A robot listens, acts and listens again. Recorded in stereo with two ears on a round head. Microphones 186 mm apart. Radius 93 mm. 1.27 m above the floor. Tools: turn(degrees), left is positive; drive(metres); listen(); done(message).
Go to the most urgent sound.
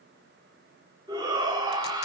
turn(degrees=-20)
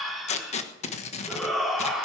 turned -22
drive(metres=1.0)
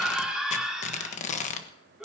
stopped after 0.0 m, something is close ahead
done("Something is in my way. I am facing the shout but have not reached it.")